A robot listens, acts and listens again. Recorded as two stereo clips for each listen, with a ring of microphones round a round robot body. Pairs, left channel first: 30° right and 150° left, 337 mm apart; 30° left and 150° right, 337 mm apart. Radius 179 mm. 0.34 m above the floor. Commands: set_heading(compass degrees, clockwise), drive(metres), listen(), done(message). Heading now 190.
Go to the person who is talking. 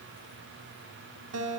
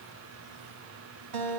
listen()
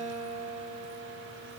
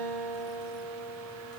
listen()
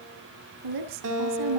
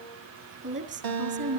set_heading(35)
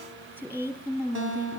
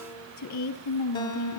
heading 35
set_heading(330)
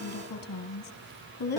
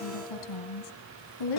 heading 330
set_heading(300)
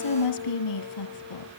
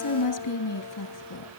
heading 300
drive(1.0)
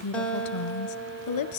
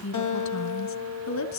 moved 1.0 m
drive(1.0)
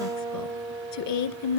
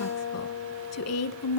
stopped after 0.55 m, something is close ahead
done("Arrived at the woman speaking, straight ahead.")